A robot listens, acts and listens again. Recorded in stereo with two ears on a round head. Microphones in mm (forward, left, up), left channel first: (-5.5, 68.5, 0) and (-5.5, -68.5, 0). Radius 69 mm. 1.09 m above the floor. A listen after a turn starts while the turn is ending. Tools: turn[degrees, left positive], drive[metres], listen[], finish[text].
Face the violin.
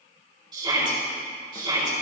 Action: listen[]
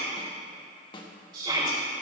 Action: listen[]
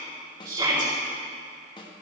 Action: finish[I can't make out a violin to turn to.]